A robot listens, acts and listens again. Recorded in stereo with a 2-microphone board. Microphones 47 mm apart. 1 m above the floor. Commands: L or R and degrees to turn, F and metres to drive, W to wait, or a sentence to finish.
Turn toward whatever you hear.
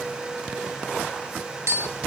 R90
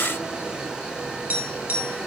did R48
R35
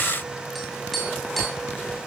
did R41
Facing the tapping.